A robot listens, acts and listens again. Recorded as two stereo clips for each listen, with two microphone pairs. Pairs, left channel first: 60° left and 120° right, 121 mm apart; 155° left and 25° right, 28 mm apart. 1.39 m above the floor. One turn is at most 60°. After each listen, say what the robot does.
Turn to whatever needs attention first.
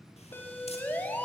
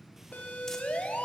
Turn 60° left.
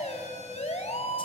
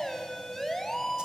Turn 60° left.
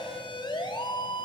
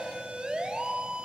Turn 15° left.
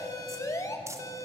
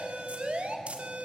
Found it: a siren, straight ahead.